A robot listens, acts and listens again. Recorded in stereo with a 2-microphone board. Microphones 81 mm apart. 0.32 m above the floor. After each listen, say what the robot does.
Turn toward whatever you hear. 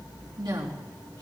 Turn 65° right.
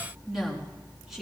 Found it: a woman speaking, straight ahead.